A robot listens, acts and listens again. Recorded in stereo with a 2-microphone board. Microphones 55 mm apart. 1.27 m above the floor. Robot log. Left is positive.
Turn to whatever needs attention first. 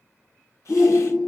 cmd yaw -30
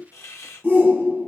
note: So it is at 140° right.
cmd yaw -140
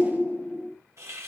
note: The shout is now 45° left.
cmd yaw +45
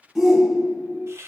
end: Found it: a shout, straight ahead, 1 to 2 m away.